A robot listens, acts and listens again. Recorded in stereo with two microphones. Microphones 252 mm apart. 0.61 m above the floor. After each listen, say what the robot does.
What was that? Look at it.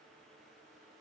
Keep listening.
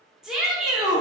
Turn 30° left.
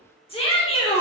Turn 155° left.
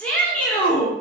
Facing the shout.